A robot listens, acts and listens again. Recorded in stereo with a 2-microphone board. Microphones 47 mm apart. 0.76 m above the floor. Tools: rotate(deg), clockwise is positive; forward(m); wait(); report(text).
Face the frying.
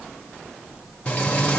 rotate(-25)
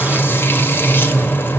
rotate(-130)
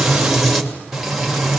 report("Found it: frying, straight ahead, 2 to 4 m away.")